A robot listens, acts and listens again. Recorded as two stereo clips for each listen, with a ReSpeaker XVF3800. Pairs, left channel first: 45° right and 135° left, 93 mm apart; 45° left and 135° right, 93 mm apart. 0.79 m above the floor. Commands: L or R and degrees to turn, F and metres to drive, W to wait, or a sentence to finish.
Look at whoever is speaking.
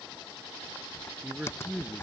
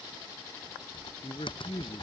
L60
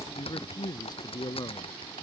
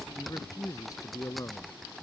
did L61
Found it: a man speaking, straight ahead.